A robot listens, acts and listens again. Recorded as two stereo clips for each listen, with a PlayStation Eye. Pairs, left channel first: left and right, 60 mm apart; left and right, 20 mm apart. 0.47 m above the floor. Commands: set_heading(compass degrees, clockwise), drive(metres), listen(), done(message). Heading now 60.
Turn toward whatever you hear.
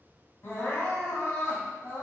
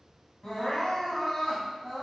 set_heading(20)
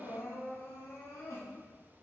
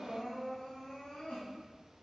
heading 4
set_heading(279)
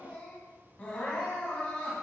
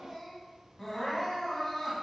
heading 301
set_heading(281)
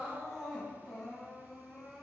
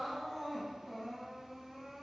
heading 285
done("Found it: crying, straight ahead.")